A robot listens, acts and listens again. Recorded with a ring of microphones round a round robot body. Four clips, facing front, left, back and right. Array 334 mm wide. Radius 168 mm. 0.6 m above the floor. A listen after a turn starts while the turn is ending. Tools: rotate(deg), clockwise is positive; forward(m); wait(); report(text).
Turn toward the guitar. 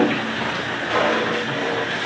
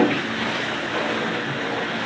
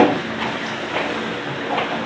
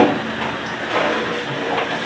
wait()
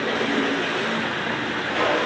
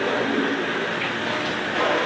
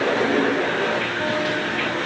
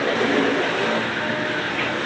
wait()
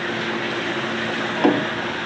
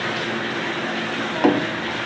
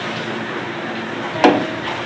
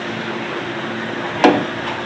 report("I can't make out a guitar.")